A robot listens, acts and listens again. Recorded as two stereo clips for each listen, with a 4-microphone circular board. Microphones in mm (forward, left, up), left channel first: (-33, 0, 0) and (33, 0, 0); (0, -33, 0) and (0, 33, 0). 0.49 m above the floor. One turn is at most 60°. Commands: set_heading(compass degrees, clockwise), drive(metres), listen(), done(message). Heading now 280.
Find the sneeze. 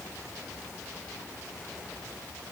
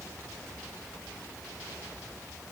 listen()
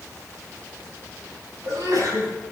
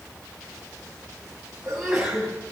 done("Facing the sneeze.")